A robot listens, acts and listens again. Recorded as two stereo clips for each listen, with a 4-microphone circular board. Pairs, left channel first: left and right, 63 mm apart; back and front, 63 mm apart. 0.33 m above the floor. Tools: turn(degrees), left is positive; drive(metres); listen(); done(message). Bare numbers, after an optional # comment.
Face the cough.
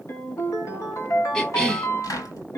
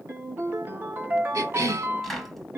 # The cough: 15° left.
turn(15)
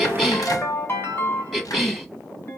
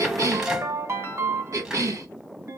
done("Facing the cough, 2 to 4 m away.")